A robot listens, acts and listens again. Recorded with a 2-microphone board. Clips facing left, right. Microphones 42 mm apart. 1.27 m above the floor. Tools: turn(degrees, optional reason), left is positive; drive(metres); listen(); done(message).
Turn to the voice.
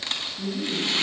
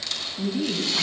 turn(degrees=-45, reason="The woman speaking: about 45° right or 135° right.")
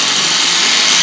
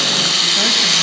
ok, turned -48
listen()
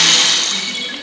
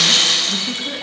listen()
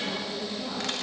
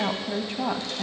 turn(degrees=-85, reason="So it is at 85° right.")
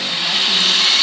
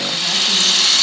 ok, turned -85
listen()
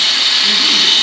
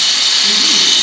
listen()
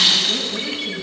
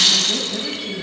done("Found it: a woman speaking, straight ahead.")